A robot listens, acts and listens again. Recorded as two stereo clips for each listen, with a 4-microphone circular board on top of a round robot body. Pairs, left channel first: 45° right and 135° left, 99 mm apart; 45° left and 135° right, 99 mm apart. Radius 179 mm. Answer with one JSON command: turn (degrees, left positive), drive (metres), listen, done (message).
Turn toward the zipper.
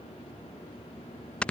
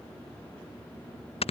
{"listen": true}
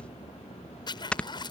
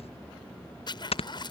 {"done": "Facing the zipper."}